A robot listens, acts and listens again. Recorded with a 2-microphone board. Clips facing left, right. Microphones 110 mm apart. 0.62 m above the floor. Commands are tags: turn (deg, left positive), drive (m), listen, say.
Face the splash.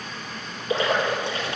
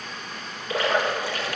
<turn deg="25"/>
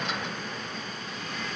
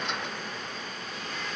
<listen/>
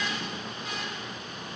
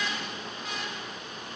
<say>I heard a splash, but can't make it out now. It was about straight ahead or 130° left.</say>